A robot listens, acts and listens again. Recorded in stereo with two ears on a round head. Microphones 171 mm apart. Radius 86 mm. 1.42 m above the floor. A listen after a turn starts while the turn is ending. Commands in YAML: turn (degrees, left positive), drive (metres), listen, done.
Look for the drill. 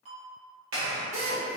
turn: -35
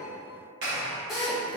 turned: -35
done: "Found it: a drill, straight ahead, 1 to 2 m away."